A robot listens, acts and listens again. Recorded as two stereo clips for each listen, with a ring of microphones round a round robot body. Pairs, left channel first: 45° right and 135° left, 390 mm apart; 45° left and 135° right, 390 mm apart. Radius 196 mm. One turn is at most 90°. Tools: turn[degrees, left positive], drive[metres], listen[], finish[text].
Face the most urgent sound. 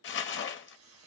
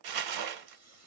Action: listen[]
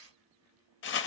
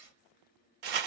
Action: listen[]
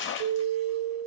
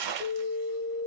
Thought: The alarm: 130° left.
Action: turn[90]
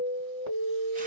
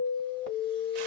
Thought: The alarm is now 80° left.
Action: turn[80]
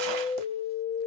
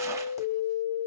Thought: The alarm is now 20° left.
Action: turn[20]
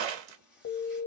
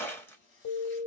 Action: finish[Facing the alarm.]